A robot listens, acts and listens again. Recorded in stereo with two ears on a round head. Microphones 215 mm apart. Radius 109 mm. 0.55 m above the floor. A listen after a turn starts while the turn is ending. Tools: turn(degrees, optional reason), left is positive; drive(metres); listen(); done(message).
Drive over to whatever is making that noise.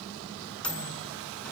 turn(degrees=30)
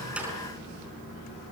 listen()
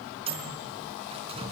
turn(degrees=-25, reason="So it is at 25° right.")
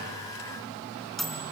drive(metres=1.0)
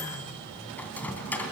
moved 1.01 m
drive(metres=1.0)
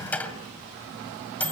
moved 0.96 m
drive(metres=1.0)
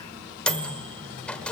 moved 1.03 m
drive(metres=1.0)
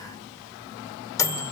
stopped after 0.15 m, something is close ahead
turn(degrees=15, reason="The microwave is now 15° left.")
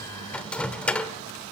done("Arrived at the microwave, straight ahead.")